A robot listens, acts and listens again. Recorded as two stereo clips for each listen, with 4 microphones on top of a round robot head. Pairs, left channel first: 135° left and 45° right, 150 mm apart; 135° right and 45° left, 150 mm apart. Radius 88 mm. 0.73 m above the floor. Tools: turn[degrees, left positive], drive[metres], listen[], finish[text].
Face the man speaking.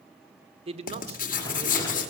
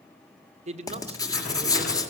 Action: finish[Facing the man speaking, 2 to 4 m away.]